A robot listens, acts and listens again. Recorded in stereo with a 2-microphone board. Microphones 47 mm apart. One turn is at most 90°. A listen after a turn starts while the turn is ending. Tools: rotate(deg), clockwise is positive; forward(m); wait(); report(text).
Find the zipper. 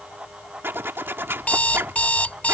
rotate(55)
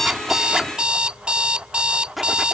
report("Facing the zipper.")